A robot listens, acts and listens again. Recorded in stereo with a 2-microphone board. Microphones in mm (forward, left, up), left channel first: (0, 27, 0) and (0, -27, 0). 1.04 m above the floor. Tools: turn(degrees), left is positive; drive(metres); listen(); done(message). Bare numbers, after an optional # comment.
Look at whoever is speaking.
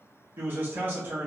# The man speaking: about 35° right or 145° right.
turn(-35)
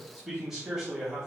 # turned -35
done("Facing the man speaking, 1 to 2 m away.")